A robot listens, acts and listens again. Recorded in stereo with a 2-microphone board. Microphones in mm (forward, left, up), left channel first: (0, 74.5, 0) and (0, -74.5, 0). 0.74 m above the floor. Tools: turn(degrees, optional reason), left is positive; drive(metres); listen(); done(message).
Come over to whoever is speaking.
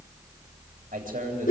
turn(degrees=-90)
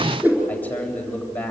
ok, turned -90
turn(degrees=10, reason="So it is at 10° left.")
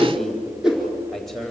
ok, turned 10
drive(metres=1.0)
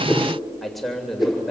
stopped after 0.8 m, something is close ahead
done("Blocked. The man speaking is further on, straight ahead.")